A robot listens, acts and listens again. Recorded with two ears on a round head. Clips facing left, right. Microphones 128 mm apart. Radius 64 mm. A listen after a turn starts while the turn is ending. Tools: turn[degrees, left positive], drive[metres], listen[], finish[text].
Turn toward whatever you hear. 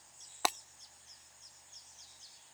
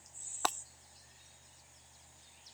Action: turn[30]
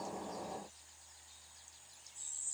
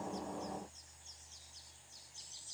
Action: listen[]
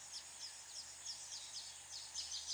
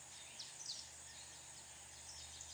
Action: finish[I heard breaking glass, but can't make it out now. It was about 20° right or 140° left.]